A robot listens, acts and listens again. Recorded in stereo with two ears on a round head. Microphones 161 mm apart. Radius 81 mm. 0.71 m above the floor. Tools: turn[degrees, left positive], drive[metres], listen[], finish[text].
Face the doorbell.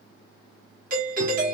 Thought: The doorbell: about 50° right or 130° right.
Action: turn[-50]
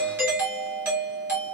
Thought: So it is at 15° right.
Action: turn[-15]
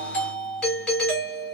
Action: finish[Found it: a doorbell, straight ahead, 1 to 2 m away.]